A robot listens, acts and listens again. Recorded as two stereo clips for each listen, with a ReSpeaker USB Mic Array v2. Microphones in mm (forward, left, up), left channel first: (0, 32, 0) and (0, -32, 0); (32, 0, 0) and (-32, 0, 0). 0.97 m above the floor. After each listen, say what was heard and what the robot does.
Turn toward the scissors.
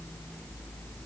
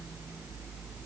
Keep listening.
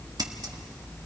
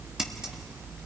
The scissors: 100° right. Turn 100° right.
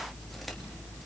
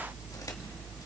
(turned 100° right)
Keep listening.
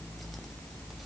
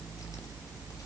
Keep listening.
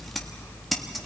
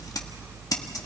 Found it: scissors, straight ahead.